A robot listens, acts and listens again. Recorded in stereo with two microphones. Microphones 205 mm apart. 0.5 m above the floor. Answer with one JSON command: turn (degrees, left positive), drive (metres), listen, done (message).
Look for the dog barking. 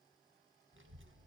{"listen": true}
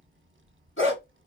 {"turn": 90}
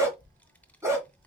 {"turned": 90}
{"turn": -15}
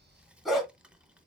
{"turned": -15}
{"done": "Facing the dog barking, 1 to 2 m away."}